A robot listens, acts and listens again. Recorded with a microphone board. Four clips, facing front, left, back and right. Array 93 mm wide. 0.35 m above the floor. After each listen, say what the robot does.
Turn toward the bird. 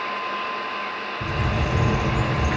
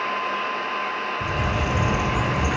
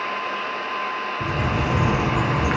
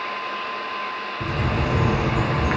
Turn 140° right.
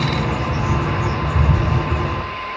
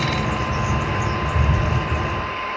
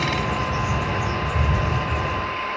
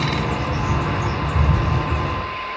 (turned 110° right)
Turn 30° right.
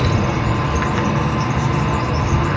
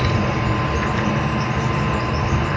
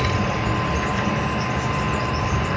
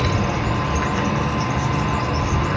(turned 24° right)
Found it: a bird, straight ahead.